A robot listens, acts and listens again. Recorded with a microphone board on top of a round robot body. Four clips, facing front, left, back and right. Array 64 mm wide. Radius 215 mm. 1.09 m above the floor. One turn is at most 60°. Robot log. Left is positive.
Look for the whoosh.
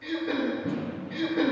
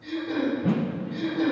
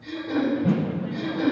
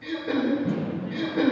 note: The whoosh: 120° left.
cmd yaw +60
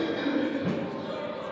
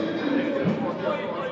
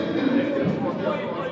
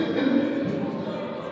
note: The whoosh is now 65° left.
cmd yaw +60
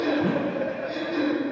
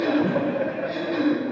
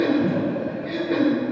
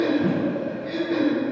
cmd idle
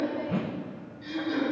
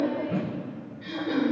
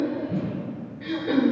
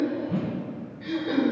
end: Found it: a whoosh, straight ahead.